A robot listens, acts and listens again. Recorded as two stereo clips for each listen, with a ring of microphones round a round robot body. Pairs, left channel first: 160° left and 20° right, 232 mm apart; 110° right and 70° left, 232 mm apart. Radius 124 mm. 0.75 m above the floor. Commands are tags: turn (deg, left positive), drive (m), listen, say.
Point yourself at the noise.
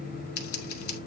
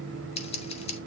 <turn deg="180"/>
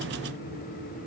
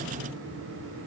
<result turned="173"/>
<turn deg="10"/>
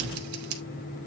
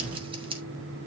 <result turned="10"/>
<say>Facing the scissors.</say>